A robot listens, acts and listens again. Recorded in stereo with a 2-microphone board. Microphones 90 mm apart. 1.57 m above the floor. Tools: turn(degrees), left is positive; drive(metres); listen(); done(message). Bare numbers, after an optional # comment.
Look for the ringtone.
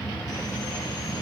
listen()
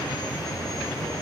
listen()
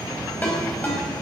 # The ringtone: about 15° left or 165° left.
turn(15)
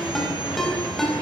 done("Facing the ringtone, over 4 m away.")